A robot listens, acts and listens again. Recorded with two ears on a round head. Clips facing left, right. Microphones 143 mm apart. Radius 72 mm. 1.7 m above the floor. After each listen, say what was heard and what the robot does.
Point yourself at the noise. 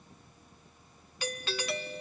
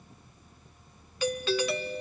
The doorbell: about 75° right or 105° right. Turn 75° right.
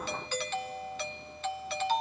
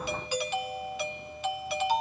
So it is at 10° right. Turn 10° right.
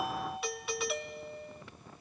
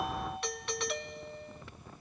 Found it: a doorbell, straight ahead.